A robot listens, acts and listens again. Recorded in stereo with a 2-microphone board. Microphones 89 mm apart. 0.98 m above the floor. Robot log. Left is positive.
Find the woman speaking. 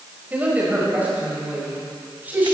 note: The woman speaking: about 20° right or 160° right.
cmd yaw -20
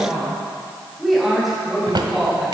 cmd yaw +30
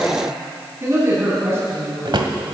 note: So it is at 30° right.
cmd yaw -30
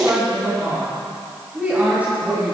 note: The woman speaking is now 15° right.
cmd yaw -15
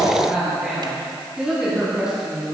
note: The woman speaking is now 10° right.
cmd yaw -10
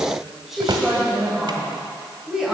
end: Facing the woman speaking.